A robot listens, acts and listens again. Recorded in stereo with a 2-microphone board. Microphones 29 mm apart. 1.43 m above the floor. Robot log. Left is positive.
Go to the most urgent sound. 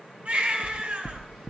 note: The baby crying: about 50° right or 130° right.
cmd yaw -50
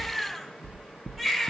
cmd fwd 1.0
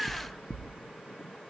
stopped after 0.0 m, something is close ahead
note: The baby crying is now 10° right.
cmd yaw -10
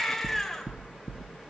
end: Blocked. The baby crying is further on, straight ahead.